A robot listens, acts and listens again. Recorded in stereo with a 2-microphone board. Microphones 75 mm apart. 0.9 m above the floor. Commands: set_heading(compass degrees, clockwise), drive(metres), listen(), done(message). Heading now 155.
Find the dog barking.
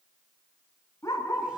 set_heading(120)
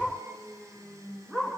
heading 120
set_heading(130)
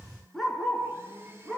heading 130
done("Found it: a dog barking, straight ahead, over 4 m away.")